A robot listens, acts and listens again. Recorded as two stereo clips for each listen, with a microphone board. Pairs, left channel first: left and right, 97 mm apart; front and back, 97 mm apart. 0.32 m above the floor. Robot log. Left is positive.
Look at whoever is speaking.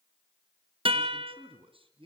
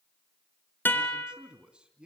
note: The man speaking: 100° right.
cmd yaw -100
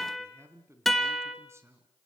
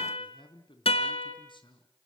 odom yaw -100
note: The man speaking is now 30° right.
cmd yaw -30
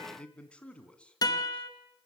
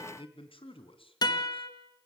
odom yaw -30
note: The man speaking is now 10° left.
cmd yaw +10
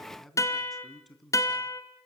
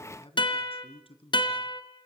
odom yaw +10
end: Found it: a man speaking, straight ahead, 2 to 4 m away.